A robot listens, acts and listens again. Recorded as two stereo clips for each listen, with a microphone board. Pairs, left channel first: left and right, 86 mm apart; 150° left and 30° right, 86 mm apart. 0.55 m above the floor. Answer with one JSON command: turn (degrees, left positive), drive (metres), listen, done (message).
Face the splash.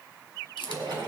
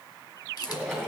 {"turn": -125}
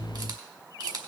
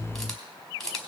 {"done": "I heard a splash from this way, but can't make it out now."}